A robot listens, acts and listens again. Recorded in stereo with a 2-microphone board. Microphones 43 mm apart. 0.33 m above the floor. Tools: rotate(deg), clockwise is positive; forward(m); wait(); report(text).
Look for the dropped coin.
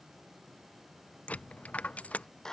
rotate(-30)
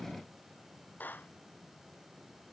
wait()
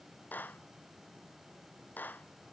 report("I heard a dropped coin, but can't make it out now. It was about straight ahead or 120° left.")